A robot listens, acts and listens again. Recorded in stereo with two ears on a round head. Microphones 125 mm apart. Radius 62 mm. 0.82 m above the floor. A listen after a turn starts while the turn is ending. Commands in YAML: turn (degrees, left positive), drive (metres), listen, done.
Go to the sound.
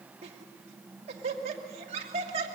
turn: -45
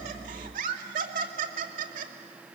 turn: -85
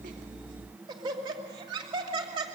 turn: -35
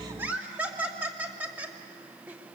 turn: -10
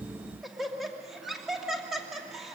drive: 1.0
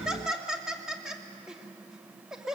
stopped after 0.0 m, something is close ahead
done: "Blocked. The laughter is further on, straight ahead."